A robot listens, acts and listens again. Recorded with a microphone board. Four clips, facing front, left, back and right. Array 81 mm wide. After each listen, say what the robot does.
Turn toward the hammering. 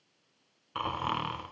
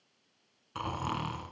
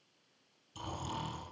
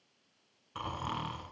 Keep listening.
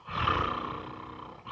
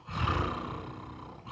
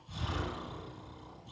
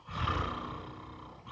Keep listening.
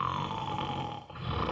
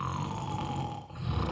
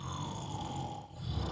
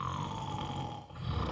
I can't make out hammering, only snoring.